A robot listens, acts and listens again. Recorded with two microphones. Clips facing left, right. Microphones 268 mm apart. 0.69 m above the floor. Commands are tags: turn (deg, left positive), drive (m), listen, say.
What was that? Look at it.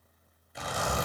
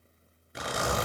<turn deg="-90"/>
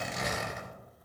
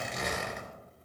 <say>Facing the zipper.</say>